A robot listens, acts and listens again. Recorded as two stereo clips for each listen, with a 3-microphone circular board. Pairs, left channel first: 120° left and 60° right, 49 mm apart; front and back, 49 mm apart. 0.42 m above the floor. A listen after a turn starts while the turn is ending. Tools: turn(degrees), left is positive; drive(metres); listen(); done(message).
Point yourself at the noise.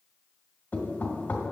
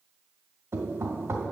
turn(degrees=180)
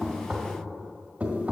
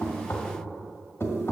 done("Found it: knocking, straight ahead.")